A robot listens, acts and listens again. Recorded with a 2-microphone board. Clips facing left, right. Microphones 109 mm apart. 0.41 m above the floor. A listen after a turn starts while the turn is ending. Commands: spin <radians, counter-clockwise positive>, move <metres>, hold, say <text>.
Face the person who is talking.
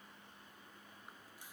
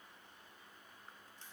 hold
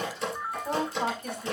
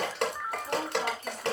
spin 1.13
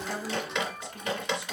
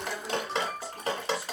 hold
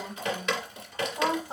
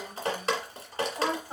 spin 0.35
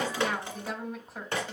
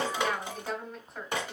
say Facing the woman speaking, 1 to 2 m away.